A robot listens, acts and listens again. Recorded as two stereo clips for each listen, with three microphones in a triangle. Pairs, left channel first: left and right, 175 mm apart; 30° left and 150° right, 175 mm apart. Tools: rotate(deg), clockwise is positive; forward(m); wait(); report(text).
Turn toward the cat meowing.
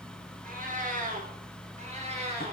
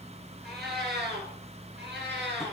rotate(145)
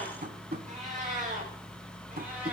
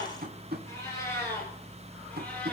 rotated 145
rotate(45)
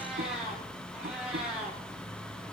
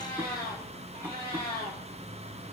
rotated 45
report("Facing the cat meowing.")